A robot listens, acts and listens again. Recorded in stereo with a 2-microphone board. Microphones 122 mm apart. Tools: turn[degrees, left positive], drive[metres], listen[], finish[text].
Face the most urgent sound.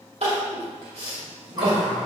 Thought: The crying: about 60° right or 120° right.
Action: turn[-60]
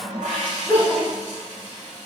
Thought: So it is at 15° right.
Action: turn[-15]
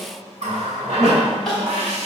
Action: finish[Found it: crying, straight ahead.]